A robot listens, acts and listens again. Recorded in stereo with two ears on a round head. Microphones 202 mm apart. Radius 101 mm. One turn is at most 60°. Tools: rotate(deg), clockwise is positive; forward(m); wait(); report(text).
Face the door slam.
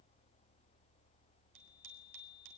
wait()
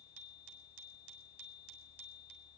wait()
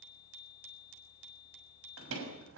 rotate(60)
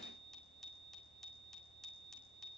wait()
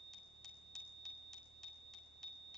report("I heard a door slam, but can't make it out now. It was about 10° right or 50° right.")